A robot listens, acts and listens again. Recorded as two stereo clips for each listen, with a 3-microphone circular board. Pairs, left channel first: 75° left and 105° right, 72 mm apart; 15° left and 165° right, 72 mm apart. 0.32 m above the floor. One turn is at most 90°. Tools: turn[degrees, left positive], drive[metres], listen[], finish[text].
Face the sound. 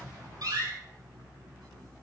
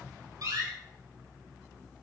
Thought: The door slam: 130° right.
Action: turn[-90]
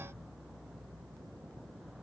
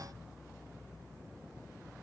Thought: Nothing new. It was at 40° right.
Action: turn[-40]
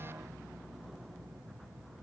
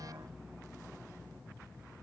Action: finish[Facing where the door slam came from. I can't hear it now.]